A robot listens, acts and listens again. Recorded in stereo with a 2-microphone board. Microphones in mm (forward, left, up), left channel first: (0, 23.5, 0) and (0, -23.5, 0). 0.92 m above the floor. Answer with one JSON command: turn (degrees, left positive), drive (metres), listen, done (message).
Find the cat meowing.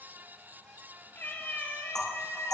{"turn": 55}
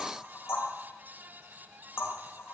{"listen": true}
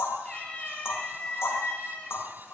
{"turn": 30}
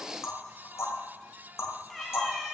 {"done": "Found it: a cat meowing, straight ahead."}